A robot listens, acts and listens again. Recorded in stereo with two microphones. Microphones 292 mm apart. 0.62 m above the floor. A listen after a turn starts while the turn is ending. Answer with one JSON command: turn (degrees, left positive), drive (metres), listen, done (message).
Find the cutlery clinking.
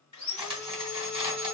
{"turn": -15}
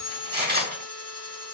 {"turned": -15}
{"turn": -150}
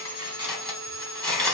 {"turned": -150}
{"done": "Found it: cutlery clinking, straight ahead."}